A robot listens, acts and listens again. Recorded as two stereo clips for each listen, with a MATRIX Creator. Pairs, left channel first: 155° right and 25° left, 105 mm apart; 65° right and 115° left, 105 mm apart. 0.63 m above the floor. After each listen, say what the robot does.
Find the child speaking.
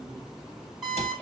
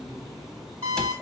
Keep listening.
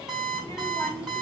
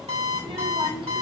Turn 145° left.
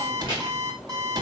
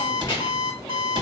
Keep listening.
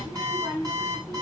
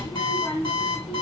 Turn 35° right.
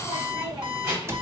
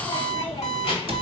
Turn 30° right.
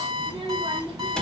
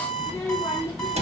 Found it: a child speaking, straight ahead, 2 to 4 m away.